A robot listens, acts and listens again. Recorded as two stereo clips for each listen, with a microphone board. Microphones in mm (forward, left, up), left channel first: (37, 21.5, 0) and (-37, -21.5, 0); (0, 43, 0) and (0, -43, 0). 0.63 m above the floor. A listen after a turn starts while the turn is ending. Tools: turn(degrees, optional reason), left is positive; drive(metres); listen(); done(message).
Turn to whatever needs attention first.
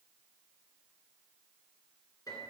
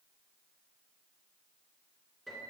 listen()
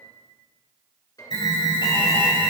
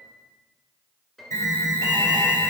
turn(degrees=40, reason="The alarm: 40° left.")
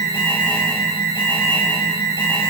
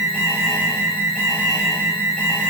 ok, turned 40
turn(degrees=15, reason="The alarm is now 15° left.")
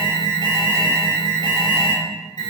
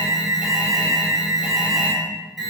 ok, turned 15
done("Facing the alarm.")